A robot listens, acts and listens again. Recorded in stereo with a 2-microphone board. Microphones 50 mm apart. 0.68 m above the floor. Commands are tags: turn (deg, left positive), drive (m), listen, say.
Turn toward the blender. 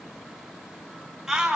<listen/>
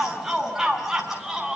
<listen/>
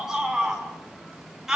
<say>I can't make out a blender to turn to.</say>